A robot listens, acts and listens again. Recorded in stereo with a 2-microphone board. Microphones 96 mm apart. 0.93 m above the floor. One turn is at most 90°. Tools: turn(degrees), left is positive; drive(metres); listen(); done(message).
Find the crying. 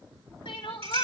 turn(degrees=70)
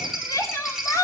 turn(degrees=35)
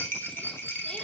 listen()
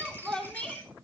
turn(degrees=10)
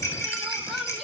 done("Found it: crying, straight ahead, 2 to 4 m away.")